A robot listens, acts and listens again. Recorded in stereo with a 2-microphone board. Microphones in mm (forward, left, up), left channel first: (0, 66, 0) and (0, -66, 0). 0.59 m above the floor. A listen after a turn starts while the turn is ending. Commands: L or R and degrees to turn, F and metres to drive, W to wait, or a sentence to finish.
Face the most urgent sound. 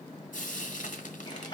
W
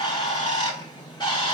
W
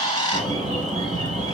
R70
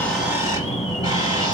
Facing the alarm.